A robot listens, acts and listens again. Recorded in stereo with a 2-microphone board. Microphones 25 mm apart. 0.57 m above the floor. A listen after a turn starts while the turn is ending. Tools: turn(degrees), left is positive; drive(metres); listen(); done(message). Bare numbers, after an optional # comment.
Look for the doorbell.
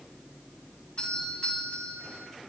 # The doorbell: about 45° left or 135° left.
turn(45)
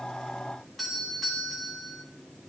done("Found it: a doorbell, straight ahead.")